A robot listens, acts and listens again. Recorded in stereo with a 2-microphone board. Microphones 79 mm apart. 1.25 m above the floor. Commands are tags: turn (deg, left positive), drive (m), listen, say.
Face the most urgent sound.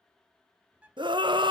<turn deg="-75"/>
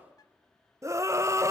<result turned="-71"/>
<turn deg="-35"/>
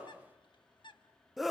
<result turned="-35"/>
<say>Found it: a scream, straight ahead.</say>